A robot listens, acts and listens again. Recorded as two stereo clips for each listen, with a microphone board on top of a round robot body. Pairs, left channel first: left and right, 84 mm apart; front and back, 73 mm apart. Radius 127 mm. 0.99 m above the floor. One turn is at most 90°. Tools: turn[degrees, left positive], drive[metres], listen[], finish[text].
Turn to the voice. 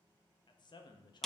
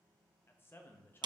Thought: The man speaking: 60° left.
Action: turn[60]
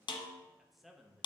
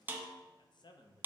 Action: finish[Found it: a man speaking, straight ahead.]